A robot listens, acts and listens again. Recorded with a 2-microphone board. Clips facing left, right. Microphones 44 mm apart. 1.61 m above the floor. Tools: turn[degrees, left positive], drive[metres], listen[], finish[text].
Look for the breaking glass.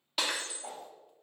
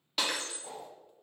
Action: turn[30]
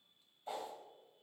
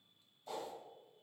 Action: listen[]
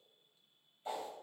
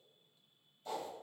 Action: finish[I heard breaking glass, but can't make it out now. It was about 25° right or 145° left.]